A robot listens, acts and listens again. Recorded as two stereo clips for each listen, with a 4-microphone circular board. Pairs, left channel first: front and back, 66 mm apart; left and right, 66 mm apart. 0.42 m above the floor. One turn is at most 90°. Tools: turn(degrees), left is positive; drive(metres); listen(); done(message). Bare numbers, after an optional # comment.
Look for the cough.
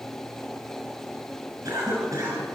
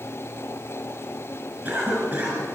# The cough: 150° right.
turn(-90)
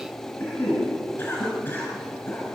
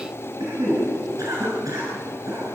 # The cough is now 60° right.
turn(-60)
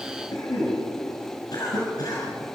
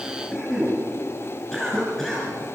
# The cough is now 10° left.
turn(10)
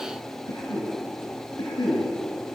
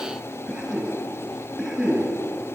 done("Facing the cough.")